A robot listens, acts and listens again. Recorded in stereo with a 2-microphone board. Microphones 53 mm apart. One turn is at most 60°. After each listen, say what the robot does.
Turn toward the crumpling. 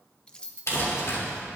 Turn 60° left.
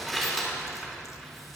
Facing the crumpling, 2 to 4 m away.